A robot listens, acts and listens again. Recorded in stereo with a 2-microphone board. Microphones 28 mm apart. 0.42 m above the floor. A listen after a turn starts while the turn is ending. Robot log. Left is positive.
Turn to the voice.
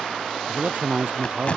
note: The man speaking: about 50° right or 130° right.
cmd yaw -50
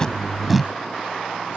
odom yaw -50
cmd idle
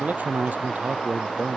note: So it is at 80° right.
cmd yaw -80
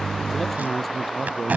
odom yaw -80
end: Facing the man speaking.